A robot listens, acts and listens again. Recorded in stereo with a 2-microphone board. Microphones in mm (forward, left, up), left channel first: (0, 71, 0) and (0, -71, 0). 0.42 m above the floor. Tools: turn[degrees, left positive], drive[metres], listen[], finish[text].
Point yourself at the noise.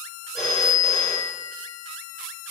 Action: turn[30]
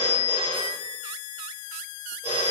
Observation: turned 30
Thought: So it is at 150° left.
Action: turn[150]
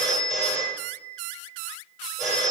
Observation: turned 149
Action: finish[Found it: a phone ringing, straight ahead.]